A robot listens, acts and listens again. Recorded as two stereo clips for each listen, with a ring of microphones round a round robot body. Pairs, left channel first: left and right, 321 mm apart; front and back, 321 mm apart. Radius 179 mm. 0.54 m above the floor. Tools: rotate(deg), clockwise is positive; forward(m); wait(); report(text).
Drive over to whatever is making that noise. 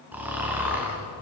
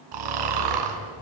rotate(175)
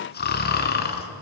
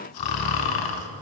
rotate(-30)
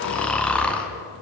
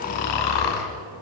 forward(1.0)
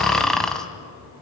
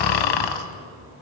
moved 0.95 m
forward(1.0)
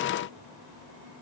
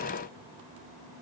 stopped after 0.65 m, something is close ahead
wait()
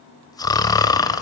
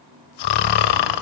rotate(-10)
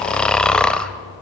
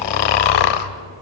report("Arrived at the snoring, straight ahead.")